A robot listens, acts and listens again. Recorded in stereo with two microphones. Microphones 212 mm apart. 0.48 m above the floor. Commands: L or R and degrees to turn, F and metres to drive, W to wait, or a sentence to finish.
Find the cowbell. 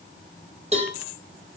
R30
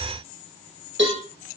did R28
R120
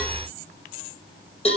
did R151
L30
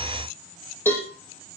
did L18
L10
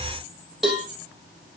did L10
Facing the cowbell, over 4 m away.